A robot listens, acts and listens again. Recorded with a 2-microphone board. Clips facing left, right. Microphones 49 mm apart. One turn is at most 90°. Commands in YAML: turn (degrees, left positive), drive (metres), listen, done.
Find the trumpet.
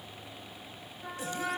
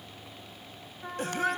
turn: -20
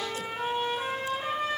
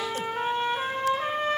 turn: -90
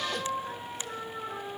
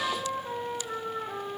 turn: -20
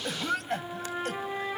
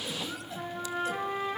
done: "Found it: a trumpet, straight ahead, over 4 m away."